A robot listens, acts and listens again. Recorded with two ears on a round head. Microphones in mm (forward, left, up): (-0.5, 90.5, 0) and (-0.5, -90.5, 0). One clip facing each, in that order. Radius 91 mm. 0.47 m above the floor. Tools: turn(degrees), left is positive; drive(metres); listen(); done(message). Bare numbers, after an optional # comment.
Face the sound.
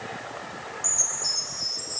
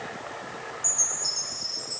# The chime: about 20° left or 160° left.
turn(20)
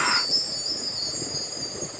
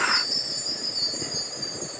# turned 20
done("Facing the chime, 2 to 4 m away.")